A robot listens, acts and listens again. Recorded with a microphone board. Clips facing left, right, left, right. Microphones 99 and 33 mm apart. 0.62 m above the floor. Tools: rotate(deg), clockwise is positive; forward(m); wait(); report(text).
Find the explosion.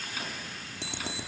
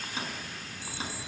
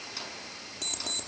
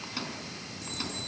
wait()
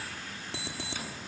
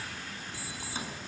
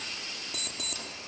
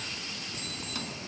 wait()
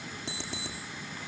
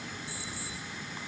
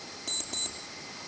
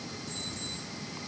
report("I can't make out an explosion to turn to.")